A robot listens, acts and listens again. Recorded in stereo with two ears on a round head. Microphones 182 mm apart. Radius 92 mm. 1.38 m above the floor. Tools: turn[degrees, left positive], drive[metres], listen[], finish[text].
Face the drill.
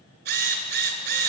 Thought: The drill: about 55° right or 125° right.
Action: turn[-55]
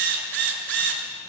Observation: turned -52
Thought: So it is at 70° right.
Action: turn[-70]
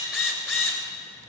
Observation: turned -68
Action: finish[Facing the drill, 2 to 4 m away.]